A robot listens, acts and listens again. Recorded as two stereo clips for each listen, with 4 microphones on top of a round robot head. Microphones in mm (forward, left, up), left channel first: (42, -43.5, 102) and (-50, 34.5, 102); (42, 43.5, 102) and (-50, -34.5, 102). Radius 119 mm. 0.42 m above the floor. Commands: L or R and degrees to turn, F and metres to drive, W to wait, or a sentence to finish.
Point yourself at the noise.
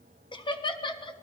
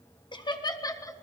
R10
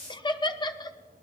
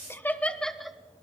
R55
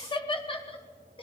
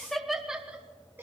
R70
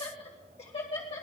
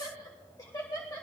R20
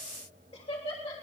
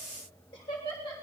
R10
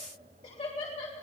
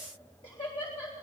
Facing the laughter, 2 to 4 m away.